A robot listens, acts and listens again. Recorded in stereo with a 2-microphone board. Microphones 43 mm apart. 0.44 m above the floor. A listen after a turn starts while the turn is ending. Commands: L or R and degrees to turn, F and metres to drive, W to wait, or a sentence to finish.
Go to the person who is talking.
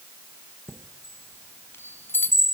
W
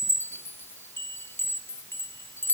W
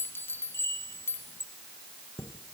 I can't make out anyone speaking to turn to.